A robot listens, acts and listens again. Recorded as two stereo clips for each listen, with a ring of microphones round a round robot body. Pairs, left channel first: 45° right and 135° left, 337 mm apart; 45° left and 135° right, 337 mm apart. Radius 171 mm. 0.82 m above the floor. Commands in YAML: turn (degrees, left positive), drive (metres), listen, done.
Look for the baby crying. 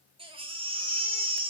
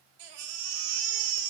turn: -150
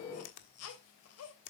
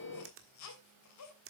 done: "Facing the baby crying, 2 to 4 m away."